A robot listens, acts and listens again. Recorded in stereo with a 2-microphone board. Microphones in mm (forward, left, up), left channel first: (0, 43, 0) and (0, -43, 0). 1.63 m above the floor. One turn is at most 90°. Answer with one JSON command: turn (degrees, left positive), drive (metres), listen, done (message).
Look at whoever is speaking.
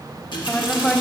{"turn": 30}
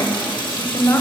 {"turn": 90}
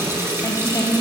{"turn": 35}
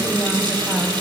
{"done": "Found it: a woman speaking, straight ahead."}